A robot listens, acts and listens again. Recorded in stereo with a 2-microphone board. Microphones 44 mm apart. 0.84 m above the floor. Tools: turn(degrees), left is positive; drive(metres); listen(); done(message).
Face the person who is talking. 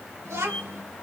turn(degrees=-75)
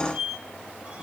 listen()
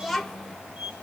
done("Found it: a child speaking, straight ahead.")